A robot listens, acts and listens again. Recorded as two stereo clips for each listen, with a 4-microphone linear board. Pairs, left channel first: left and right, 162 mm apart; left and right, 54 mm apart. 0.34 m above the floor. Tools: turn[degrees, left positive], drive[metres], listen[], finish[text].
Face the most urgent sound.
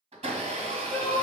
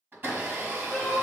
Action: turn[30]
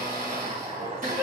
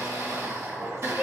Thought: So it is at 15° right.
Action: turn[-15]
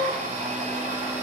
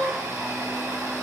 Action: finish[Facing the crying, 1 to 2 m away.]